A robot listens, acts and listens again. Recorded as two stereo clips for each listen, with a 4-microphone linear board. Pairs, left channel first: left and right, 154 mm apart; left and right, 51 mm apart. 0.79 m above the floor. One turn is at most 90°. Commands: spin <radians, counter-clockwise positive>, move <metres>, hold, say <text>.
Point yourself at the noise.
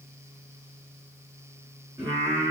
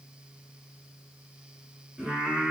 spin -0.44
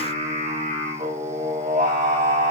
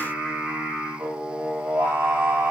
spin -1.57
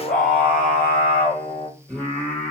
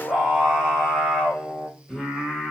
spin 0.17
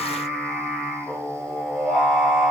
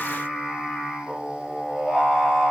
say Facing the singing.